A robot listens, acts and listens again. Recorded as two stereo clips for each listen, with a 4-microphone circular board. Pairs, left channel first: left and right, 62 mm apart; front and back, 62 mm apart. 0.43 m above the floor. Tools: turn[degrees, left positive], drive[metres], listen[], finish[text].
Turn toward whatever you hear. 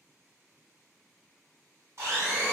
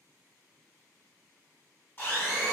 Thought: The blender: 55° right.
Action: turn[-55]
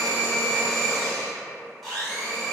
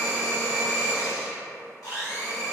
Action: finish[Facing the blender.]